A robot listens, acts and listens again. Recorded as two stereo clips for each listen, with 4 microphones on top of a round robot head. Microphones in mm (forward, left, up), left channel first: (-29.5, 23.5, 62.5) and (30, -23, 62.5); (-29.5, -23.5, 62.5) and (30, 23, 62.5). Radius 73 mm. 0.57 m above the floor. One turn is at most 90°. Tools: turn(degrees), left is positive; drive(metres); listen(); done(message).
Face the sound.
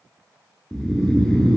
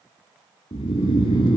turn(degrees=-90)
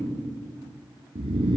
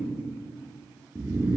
turn(degrees=-25)
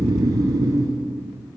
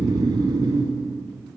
done("Found it: snoring, straight ahead, 1 to 2 m away.")